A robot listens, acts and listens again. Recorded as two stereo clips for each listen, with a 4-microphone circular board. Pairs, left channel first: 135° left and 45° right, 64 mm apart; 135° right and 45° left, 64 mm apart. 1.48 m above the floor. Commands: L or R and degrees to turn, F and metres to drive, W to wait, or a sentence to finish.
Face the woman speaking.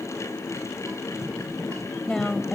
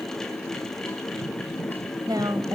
L55
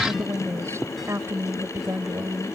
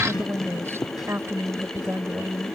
Facing the woman speaking.